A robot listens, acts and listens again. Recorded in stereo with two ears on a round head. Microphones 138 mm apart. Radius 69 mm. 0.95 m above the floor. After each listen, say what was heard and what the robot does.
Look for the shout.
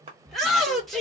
Turn 30° left.
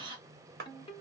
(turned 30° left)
Keep listening.
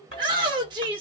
So it is at 30° right. Turn 30° right.
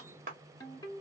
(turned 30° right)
Keep listening.
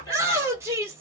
The shout is now 15° right. Turn 15° right.
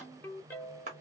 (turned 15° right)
Keep listening.
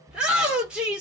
Facing the shout.